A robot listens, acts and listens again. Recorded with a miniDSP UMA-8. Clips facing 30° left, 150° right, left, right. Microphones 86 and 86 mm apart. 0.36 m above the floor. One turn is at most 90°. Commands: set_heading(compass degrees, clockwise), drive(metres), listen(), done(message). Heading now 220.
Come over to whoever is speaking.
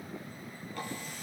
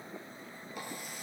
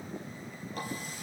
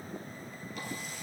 listen()
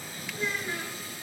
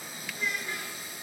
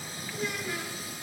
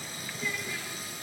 set_heading(130)
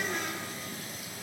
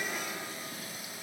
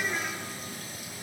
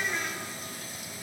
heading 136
listen()
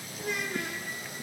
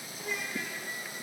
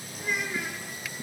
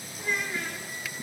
drive(1.0)
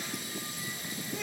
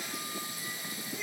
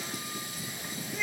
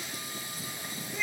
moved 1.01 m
set_heading(126)
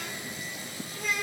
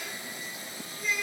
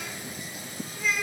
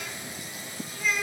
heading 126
drive(1.0)
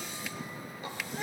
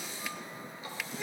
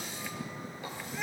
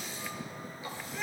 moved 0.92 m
drive(1.0)
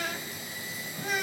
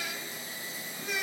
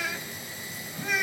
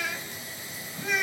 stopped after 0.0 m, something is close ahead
done("Arrived at the child speaking, straight ahead.")